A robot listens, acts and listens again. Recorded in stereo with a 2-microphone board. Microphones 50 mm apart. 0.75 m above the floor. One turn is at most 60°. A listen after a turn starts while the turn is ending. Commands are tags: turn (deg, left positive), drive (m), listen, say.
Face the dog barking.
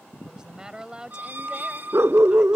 <turn deg="-60"/>
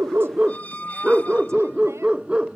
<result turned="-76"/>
<turn deg="-25"/>
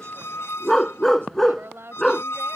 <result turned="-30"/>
<say>Facing the dog barking.</say>